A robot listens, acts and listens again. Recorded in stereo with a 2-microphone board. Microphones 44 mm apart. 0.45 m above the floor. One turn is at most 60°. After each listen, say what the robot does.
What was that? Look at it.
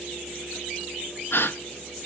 Turn 60° left.
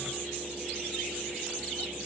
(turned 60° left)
Keep listening.
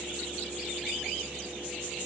I heard a gasp, but can't make it out now. It was about 5° left or 55° left.